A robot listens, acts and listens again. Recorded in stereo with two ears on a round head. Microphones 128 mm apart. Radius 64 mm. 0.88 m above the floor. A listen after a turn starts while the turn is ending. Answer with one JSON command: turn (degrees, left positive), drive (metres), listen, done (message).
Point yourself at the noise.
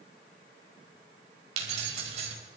{"turn": -50}
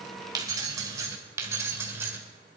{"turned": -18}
{"turn": -15}
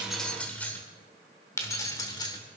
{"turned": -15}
{"turn": 30}
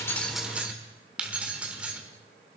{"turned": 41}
{"turn": -10}
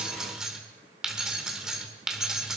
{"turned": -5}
{"done": "Facing the keys jangling."}